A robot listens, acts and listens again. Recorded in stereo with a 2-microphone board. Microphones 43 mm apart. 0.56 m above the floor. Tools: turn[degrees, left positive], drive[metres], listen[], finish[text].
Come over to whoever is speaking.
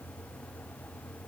Action: listen[]
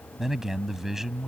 Action: turn[-30]
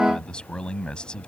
Thought: So it is at 25° left.
Action: turn[25]
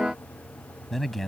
Action: drive[1.0]
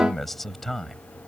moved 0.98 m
Action: drive[1.0]
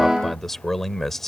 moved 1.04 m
Thought: The man speaking is now 10° left.
Action: turn[10]
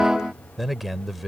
Action: drive[1.0]
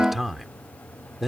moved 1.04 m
Action: drive[1.0]
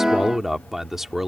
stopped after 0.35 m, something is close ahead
Thought: The man speaking is now 10° right.
Action: turn[-10]
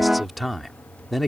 Action: finish[I am next to the man speaking.]